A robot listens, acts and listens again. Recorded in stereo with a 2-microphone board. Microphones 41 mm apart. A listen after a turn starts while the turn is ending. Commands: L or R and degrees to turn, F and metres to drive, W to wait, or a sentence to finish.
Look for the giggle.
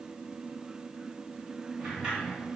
W
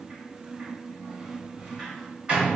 W
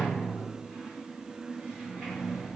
I can't make out a giggle to turn to.